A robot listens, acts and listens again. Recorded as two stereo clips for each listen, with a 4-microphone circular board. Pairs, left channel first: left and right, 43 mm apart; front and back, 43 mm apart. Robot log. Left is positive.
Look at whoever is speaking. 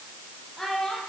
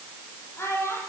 note: The child speaking: 10° left.
cmd yaw +10
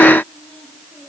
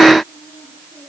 cmd idle
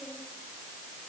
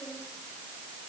cmd idle
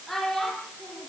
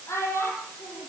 end: Found it: a child speaking, straight ahead, over 4 m away.